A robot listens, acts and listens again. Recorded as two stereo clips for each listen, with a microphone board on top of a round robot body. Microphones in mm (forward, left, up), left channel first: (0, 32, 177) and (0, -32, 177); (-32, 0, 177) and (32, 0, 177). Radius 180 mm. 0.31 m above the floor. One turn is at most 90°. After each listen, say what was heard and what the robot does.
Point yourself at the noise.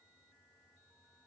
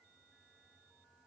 Keep listening.
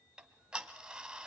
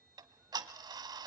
The ticking: 10° right. Turn 10° right.
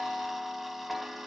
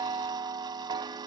Facing the ticking, under 1 m away.